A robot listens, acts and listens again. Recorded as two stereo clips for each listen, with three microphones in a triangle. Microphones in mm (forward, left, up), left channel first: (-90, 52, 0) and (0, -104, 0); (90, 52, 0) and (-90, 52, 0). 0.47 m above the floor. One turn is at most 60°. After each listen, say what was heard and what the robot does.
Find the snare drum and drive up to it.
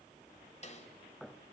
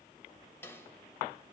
The snare drum: 75° left. Turn 60° left.
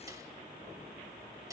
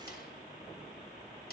Nothing new. It was at 15° left. Turn 15° left.
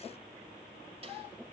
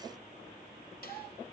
Keep listening.
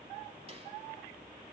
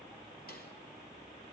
I heard a snare drum from this way, but can't make it out now. I did not reach it.